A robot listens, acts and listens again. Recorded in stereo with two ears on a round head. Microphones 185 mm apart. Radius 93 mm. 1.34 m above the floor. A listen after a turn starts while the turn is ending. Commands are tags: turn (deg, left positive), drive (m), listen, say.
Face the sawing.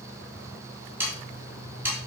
<turn deg="-30"/>
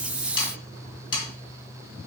<turn deg="25"/>
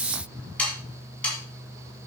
<say>Found it: sawing, straight ahead, 2 to 4 m away.</say>